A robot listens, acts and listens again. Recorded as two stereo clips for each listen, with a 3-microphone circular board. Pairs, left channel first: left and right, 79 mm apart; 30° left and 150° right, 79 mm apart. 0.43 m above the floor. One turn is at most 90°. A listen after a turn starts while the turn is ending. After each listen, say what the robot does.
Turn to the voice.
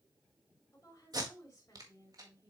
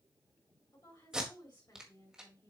Turn 45° left.
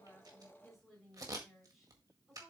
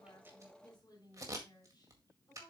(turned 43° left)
Facing the woman speaking.